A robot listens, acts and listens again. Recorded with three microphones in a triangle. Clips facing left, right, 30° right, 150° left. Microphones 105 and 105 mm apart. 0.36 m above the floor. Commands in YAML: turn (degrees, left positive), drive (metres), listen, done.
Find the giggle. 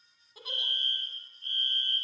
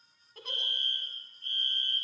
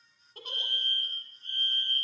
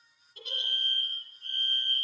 done: "Facing the giggle, 1 to 2 m away."